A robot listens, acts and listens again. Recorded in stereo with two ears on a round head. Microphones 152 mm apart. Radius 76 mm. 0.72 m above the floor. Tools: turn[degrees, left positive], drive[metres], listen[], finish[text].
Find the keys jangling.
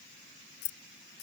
Thought: The keys jangling: about 65° left or 115° left.
Action: turn[65]
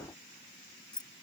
Action: finish[Found it: keys jangling, straight ahead.]